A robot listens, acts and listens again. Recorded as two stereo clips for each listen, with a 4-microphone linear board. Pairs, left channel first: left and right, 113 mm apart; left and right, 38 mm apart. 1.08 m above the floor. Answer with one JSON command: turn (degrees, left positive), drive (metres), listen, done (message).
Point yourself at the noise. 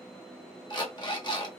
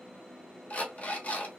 {"turn": 40}
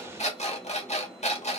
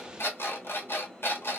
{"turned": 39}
{"turn": 95}
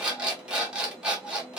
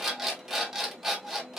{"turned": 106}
{"turn": -10}
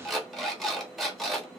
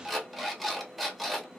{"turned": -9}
{"done": "Found it: an alarm clock, straight ahead."}